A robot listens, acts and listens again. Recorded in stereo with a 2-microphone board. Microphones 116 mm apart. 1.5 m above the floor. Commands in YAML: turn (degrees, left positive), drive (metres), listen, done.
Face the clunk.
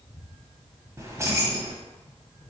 listen: true
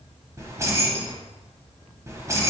listen: true
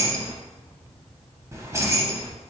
done: "I can't make out a clunk to turn to."